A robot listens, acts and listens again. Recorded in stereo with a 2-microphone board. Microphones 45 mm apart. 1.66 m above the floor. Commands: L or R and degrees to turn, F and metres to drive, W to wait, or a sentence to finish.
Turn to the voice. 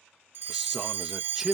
R30
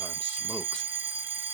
W
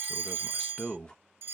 L20
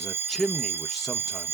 Facing the man speaking.